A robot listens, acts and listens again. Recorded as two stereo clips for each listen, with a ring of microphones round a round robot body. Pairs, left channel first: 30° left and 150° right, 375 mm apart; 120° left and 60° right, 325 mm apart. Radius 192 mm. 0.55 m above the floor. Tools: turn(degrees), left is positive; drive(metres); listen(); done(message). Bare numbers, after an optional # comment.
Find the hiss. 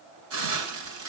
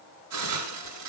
# The hiss: 105° right.
turn(-105)
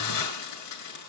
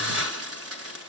# The hiss is now 15° right.
turn(-15)
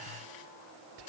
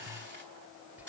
done("Found it: a hiss, straight ahead.")